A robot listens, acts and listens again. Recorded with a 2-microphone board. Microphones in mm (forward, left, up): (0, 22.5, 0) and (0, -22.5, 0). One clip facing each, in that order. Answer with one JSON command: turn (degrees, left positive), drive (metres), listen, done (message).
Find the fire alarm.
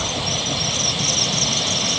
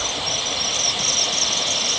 {"listen": true}
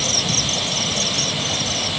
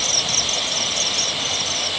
{"listen": true}
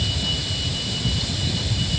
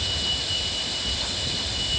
{"done": "I can't make out a fire alarm."}